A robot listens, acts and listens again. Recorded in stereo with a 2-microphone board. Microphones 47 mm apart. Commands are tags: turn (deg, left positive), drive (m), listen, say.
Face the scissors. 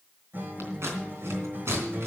<turn deg="-70"/>
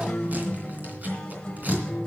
<listen/>
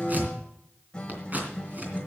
<turn deg="-35"/>
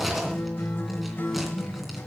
<listen/>
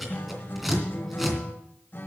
<say>Found it: scissors, straight ahead, 2 to 4 m away.</say>